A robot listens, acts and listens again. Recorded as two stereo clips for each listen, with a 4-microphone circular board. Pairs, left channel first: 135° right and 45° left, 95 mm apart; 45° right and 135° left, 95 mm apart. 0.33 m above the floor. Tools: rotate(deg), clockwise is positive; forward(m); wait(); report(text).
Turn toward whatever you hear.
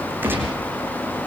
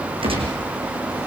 rotate(-115)
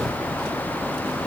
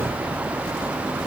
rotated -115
report("I heard a gunshot from this way, but can't make it out now.")